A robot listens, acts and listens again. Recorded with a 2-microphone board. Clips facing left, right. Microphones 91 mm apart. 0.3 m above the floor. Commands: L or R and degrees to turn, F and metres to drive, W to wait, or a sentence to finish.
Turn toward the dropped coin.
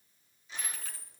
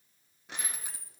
R30
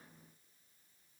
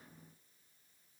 W
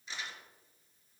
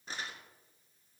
I heard a dropped coin, but can't make it out now. It was about 15° left or 135° right.